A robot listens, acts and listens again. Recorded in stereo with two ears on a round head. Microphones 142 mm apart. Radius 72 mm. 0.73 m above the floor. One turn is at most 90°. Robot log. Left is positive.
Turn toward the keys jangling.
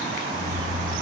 note: The keys jangling: about 25° right or 155° right.
cmd yaw -25
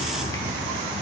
cmd yaw -30
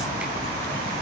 note: So it is at 15° left.
cmd yaw +15
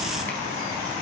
cmd idle
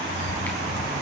note: The keys jangling is now 15° right.
cmd yaw -15
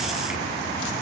cmd idle
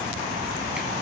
cmd idle
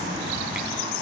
end: Facing where the keys jangling came from. I can't hear it now.